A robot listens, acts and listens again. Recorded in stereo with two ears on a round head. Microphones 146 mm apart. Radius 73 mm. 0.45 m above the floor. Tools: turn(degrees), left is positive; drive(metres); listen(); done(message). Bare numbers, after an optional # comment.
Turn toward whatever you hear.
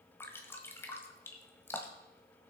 turn(30)
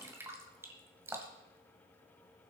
# So it is at 15° right.
turn(-15)
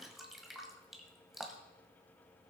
done("Facing the dripping, 1 to 2 m away.")